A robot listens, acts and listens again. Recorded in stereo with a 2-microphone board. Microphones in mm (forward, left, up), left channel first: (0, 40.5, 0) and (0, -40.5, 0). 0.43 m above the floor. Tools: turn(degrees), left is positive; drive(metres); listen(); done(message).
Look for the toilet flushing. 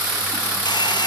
listen()
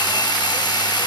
listen()
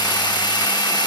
done("I can't make out a toilet flushing.")